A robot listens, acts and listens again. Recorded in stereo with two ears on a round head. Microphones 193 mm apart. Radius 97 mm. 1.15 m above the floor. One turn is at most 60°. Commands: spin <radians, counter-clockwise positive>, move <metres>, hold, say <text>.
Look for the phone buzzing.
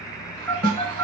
spin 0.52
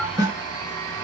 hold
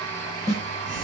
hold
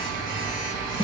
spin -0.44
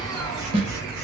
spin -0.26
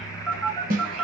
say Facing the phone buzzing, 1 to 2 m away.